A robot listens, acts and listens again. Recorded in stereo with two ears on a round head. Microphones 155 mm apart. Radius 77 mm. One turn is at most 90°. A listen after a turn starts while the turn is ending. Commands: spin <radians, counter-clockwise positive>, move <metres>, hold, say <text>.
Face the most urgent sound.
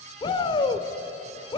spin 0.44
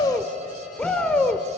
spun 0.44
say Found it: a shout, straight ahead.